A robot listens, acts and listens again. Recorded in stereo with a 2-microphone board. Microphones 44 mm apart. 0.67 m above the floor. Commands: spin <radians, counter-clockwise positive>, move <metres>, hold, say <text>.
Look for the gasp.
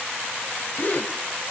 spin 0.70
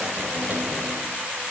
hold
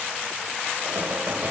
say I heard a gasp, but can't make it out now. It was about straight ahead or 100° left.